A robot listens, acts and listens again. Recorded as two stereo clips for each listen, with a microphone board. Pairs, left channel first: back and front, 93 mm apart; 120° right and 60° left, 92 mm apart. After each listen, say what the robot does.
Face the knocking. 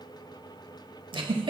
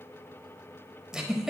Keep listening.
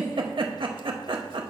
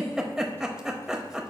Keep listening.
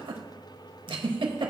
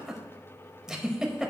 I can't make out knocking, only a giggle.